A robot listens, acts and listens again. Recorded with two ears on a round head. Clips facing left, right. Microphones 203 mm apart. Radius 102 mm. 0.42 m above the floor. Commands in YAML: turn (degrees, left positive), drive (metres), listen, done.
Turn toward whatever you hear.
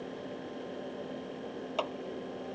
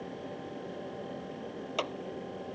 turn: -25
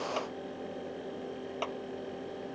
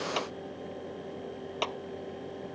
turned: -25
turn: -125
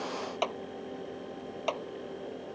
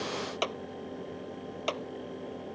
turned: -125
turn: -20
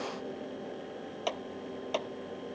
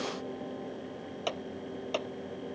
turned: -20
done: "Facing the clap."